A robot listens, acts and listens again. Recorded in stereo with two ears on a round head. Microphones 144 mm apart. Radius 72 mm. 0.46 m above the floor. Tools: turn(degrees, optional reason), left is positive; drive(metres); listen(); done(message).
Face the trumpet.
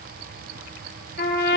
turn(degrees=65, reason="The trumpet: about 65° left or 115° left.")
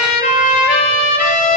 turn(degrees=50, reason="So it is at 50° left.")
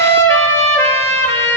turn(degrees=15, reason="The trumpet is now 15° left.")
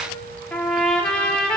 done("Found it: a trumpet, straight ahead.")